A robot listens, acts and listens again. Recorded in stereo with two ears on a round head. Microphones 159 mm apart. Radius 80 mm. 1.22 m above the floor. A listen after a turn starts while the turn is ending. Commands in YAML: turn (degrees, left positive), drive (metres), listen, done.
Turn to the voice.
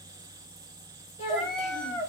turn: 35
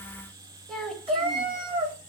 done: "Found it: a child speaking, straight ahead, 1 to 2 m away."